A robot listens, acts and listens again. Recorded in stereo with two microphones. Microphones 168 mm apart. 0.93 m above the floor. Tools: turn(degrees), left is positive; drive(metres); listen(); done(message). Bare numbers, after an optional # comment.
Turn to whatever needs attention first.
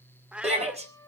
# The shout: about 40° right or 140° right.
turn(-40)
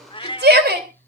# So it is at 100° right.
turn(-100)
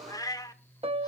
listen()
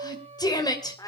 # The shout is now 25° left.
turn(25)
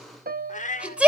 done("Facing the shout, 2 to 4 m away.")